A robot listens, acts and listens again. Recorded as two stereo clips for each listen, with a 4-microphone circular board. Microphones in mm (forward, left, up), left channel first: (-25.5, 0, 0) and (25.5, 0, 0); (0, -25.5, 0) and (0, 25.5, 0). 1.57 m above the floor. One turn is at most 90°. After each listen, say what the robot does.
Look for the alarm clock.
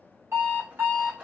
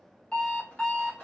Turn 25° right.
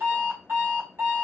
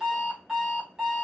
Turn 15° left.
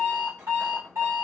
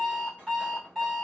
Found it: an alarm clock, straight ahead.